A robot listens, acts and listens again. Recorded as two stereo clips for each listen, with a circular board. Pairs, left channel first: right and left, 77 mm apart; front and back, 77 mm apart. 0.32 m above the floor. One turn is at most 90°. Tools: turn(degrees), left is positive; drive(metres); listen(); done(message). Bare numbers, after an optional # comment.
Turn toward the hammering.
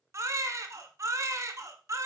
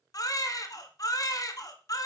listen()
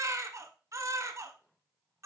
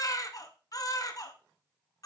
listen()
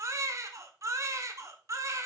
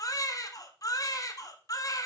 done("I can't make out hammering to turn to.")